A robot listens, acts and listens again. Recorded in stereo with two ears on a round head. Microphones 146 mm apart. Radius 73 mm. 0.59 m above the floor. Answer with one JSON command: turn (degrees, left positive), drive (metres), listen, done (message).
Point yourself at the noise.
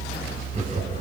{"turn": -45}
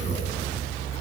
{"turn": -100}
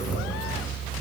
{"done": "Facing the laughter."}